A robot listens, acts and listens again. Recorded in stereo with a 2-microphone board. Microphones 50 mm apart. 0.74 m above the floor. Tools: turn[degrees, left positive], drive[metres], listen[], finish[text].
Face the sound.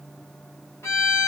Action: turn[90]
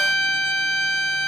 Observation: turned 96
Action: finish[Facing the violin, 1 to 2 m away.]